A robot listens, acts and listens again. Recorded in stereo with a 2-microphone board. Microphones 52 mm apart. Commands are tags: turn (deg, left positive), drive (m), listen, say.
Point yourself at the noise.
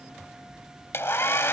<turn deg="50"/>
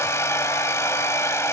<turn deg="75"/>
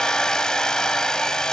<turn deg="15"/>
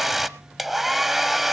<say>Facing the hair dryer, under 1 m away.</say>